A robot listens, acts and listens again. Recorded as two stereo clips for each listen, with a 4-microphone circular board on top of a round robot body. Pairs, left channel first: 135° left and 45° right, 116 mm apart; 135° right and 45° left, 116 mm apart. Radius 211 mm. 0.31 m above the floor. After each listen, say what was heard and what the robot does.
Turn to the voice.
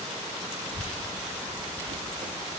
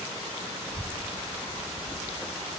The child speaking: 110° left. Turn 110° left.
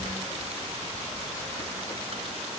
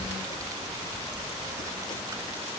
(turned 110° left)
The child speaking is now 15° right. Turn 15° right.
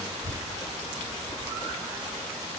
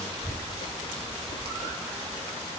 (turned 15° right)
Found it: a child speaking, straight ahead.